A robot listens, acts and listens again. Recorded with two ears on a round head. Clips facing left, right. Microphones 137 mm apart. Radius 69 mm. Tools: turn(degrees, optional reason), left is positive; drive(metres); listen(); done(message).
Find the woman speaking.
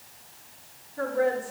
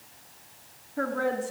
turn(degrees=-70, reason="The woman speaking: about 70° right or 110° right.")
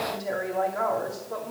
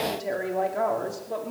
turn(degrees=-30, reason="So it is at 30° right.")
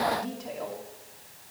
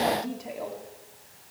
turn(degrees=-15, reason="The woman speaking is now 15° right.")
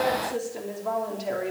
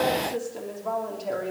done("Found it: a woman speaking, straight ahead, 2 to 4 m away.")